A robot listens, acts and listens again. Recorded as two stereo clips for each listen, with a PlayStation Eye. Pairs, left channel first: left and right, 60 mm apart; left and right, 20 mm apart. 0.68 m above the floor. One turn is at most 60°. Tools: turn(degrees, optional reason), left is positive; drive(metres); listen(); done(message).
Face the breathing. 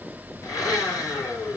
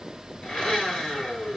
listen()
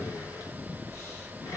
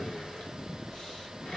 listen()
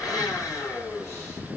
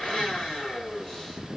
done("I can't make out breathing to turn to.")